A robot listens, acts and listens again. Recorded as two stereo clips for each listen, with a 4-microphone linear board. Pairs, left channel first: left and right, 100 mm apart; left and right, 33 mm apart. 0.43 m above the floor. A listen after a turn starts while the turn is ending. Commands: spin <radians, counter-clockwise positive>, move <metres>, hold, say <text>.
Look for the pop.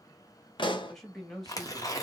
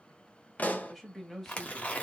spin 0.79
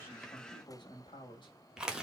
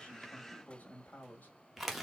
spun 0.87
hold
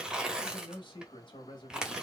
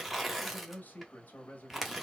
say I heard a pop, but can't make it out now. It was about 5° right or 85° left.